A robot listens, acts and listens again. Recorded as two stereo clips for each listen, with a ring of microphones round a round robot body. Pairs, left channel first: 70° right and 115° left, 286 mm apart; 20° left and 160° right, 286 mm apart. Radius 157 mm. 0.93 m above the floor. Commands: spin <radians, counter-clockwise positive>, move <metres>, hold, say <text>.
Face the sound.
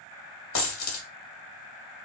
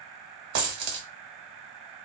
spin -1.92
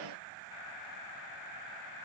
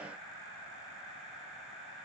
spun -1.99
say I heard a dropped coin from this way, but can't make it out now.